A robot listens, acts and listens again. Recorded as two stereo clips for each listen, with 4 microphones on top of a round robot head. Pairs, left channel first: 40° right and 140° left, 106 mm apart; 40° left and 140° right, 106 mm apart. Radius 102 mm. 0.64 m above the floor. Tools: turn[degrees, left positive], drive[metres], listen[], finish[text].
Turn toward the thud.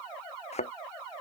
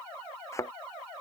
Thought: The thud: 20° right.
Action: turn[-20]
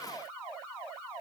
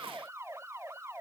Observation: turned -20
Action: finish[I heard a thud from this way, but can't make it out now.]